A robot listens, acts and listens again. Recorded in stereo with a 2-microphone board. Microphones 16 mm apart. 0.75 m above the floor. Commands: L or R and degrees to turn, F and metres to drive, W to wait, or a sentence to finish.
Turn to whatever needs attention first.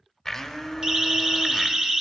R50
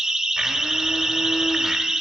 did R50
R70
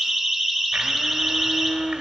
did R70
Found it: a siren, straight ahead, 2 to 4 m away.